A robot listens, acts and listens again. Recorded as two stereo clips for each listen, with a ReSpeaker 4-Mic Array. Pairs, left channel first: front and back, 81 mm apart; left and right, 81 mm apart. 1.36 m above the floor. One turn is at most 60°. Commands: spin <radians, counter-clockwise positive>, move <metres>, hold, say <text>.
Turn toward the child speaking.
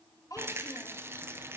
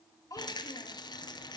spin 0.79
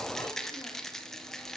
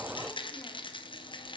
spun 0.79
hold
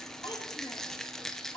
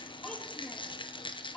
hold
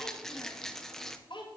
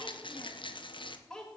spin 0.17
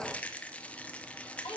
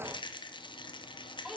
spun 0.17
say Facing the child speaking, 1 to 2 m away.